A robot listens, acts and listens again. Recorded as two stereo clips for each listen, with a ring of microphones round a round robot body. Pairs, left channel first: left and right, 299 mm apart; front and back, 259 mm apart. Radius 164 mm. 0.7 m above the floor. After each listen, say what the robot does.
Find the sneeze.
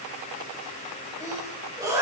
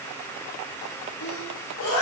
Turn 10° right.
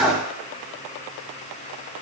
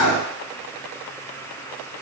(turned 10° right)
Facing the sneeze, over 4 m away.